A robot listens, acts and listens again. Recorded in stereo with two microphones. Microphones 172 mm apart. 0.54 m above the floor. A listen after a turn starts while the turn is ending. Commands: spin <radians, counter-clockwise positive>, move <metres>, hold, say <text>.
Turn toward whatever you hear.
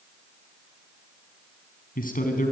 spin 0.87
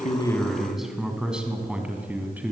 spin -0.17
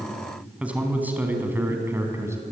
spin -0.26
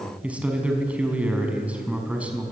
say Found it: a man speaking, straight ahead.